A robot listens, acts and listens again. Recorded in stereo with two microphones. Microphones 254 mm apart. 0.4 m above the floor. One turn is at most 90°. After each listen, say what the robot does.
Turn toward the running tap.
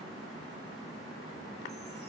Keep listening.
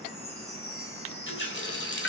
Turn 45° left.
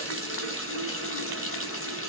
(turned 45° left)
Turn 75° left.
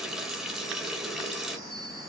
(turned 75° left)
Found it: a running tap, straight ahead, under 1 m away.